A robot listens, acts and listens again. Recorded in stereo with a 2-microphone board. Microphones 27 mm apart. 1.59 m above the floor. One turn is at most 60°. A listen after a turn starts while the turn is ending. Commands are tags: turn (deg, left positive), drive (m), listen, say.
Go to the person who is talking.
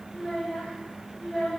<turn deg="30"/>
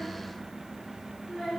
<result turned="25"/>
<turn deg="60"/>
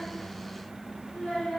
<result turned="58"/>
<turn deg="60"/>
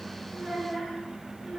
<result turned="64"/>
<drive m="1.0"/>
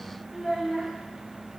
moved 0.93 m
<drive m="1.0"/>
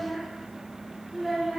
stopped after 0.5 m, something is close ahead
<say>I am next to the child speaking.</say>